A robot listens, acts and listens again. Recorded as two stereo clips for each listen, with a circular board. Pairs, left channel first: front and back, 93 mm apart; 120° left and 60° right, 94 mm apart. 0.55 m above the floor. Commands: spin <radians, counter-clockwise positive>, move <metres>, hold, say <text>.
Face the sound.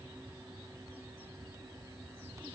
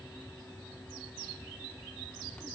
hold
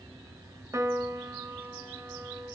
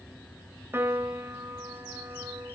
spin -2.18
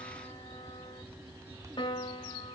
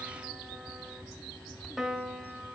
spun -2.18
spin 0.44
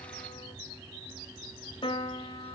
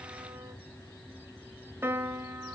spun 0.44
say Found it: a piano, straight ahead, 2 to 4 m away.